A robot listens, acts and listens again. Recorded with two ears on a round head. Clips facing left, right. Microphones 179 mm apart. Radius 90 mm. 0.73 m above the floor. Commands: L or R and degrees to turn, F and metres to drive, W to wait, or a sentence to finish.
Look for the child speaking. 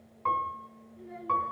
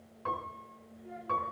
L55
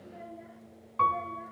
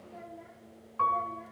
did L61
Facing the child speaking.